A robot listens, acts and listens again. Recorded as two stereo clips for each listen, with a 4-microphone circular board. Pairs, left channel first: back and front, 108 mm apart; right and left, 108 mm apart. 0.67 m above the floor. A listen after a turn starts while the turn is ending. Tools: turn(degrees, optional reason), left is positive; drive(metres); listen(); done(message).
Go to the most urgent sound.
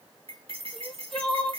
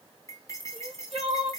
turn(degrees=90, reason="The crying: 90° left.")
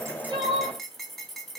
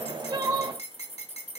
turn(degrees=30, reason="The crying is now 30° left.")
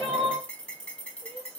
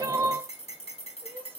turn(degrees=20, reason="The crying is now 20° left.")
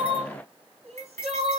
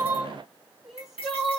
drive(metres=1.0)
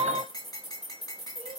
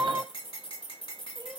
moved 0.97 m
turn(degrees=10, reason="The crying is now 10° left.")
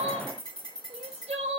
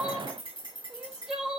drive(metres=1.0)
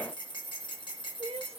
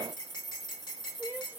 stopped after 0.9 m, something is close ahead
turn(degrees=15, reason="The crying is now 15° left.")
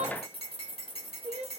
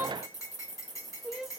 done("Arrived at the crying, straight ahead.")